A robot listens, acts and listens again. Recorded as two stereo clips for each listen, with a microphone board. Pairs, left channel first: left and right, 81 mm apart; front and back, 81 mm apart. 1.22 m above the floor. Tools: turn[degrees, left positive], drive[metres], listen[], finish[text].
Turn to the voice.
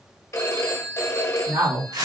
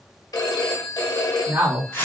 Thought: The man speaking: 115° right.
Action: turn[-115]
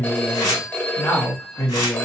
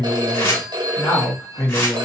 Thought: The man speaking is now 50° left.
Action: turn[50]
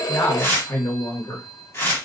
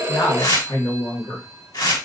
Thought: The man speaking is now 45° left.
Action: turn[45]
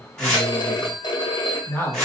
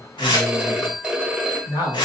Thought: The man speaking is now 20° left.
Action: turn[20]
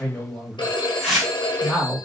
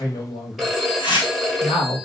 Thought: The man speaking is now 10° left.
Action: turn[10]
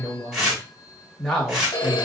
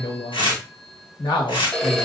Action: finish[Found it: a man speaking, straight ahead.]